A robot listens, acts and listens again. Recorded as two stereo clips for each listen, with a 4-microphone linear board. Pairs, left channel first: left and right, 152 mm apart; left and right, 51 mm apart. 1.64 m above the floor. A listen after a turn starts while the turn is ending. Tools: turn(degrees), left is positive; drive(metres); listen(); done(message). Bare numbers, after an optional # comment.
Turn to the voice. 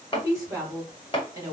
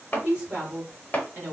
# The woman speaking: about 20° right or 160° right.
turn(-20)
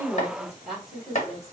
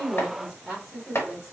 done("Found it: a woman speaking, straight ahead, 2 to 4 m away.")